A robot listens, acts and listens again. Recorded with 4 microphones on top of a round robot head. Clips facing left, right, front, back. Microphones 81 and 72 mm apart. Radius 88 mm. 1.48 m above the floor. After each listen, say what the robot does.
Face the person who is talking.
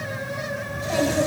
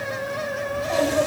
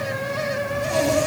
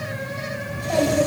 Turn 170° right.
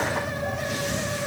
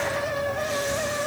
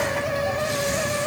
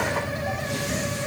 Keep listening.
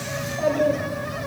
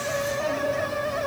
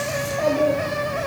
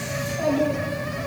Turn 45° left.
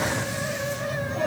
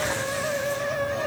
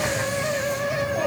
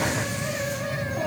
Facing the child speaking, over 4 m away.